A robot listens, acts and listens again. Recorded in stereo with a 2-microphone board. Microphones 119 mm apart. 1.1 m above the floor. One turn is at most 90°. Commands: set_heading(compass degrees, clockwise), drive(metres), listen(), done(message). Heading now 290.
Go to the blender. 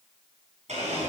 set_heading(0)
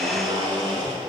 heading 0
set_heading(35)
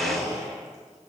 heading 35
drive(1.0)
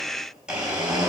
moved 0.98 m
drive(1.0)
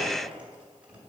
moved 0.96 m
listen()
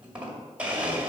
set_heading(45)
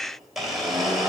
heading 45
drive(1.0)
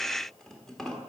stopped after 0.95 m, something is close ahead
done("I am next to the blender.")